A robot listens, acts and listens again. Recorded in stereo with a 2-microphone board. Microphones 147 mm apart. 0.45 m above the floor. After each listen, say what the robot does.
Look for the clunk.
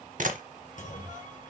Turn 60° left.
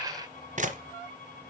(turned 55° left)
Keep listening.
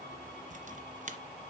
I heard a clunk, but can't make it out now. It was about 5° left or 65° left.